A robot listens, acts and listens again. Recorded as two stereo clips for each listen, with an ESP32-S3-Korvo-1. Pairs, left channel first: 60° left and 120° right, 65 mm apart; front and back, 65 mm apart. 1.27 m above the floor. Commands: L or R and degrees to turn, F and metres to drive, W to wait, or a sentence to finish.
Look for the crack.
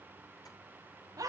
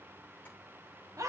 W
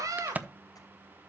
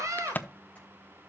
R60
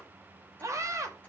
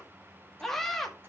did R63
I heard a crack from this way, but can't make it out now.